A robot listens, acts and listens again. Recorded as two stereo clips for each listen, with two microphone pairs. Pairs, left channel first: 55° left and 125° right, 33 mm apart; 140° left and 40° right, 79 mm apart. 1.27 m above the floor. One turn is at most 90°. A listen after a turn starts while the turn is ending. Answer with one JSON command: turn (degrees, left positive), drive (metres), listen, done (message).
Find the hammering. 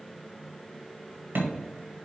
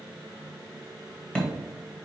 {"turn": -90}
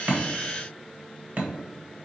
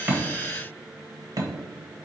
{"turn": -80}
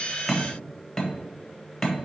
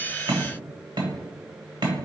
{"turn": -20}
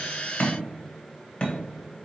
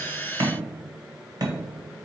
{"done": "Facing the hammering, 1 to 2 m away."}